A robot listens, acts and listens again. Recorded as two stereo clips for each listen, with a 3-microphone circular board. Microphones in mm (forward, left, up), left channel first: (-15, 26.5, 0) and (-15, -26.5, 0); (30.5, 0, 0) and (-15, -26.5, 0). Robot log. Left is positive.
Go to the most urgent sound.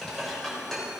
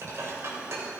cmd idle
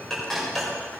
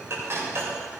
cmd idle
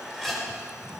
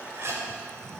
end: I can't make out anything urgent to turn to.